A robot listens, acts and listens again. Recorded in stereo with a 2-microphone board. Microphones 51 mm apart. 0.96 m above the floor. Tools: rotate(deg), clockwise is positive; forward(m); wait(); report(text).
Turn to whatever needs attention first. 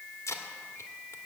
wait()
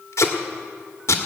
wait()
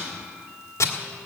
report("I can't make out anything urgent, only tape being pulled.")